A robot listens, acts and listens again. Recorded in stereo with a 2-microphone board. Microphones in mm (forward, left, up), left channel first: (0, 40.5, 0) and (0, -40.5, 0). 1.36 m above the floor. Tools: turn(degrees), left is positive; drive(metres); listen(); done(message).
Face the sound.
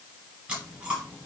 turn(degrees=-30)
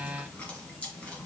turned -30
turn(degrees=15)
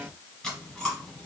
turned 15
turn(degrees=10)
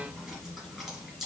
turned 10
done("Facing the chewing, 2 to 4 m away.")